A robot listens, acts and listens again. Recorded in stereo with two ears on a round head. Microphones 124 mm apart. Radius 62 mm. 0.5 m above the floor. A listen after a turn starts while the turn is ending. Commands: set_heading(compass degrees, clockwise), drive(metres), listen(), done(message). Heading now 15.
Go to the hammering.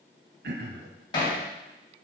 set_heading(345)
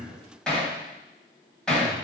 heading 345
drive(1.0)
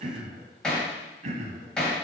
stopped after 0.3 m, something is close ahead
done("Something is in my way. I am facing the hammering but have not reached it.")